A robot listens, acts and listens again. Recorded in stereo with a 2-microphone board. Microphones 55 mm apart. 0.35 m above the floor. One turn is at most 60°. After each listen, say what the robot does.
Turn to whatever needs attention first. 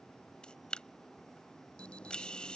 Turn 20° left.
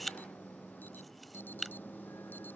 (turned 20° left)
Turn 60° left.
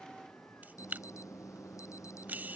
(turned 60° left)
Turn 60° left.
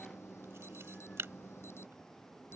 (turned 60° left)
Turn 55° left.
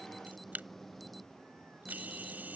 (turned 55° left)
Found it: an alarm, straight ahead.